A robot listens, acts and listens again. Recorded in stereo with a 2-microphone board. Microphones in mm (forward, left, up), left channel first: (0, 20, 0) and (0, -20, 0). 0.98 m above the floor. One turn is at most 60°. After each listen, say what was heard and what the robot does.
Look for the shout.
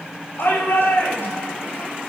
The shout: about 70° left or 110° left. Turn 60° left.
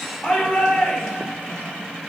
So it is at 10° left. Turn 10° left.
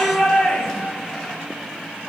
Facing the shout, 2 to 4 m away.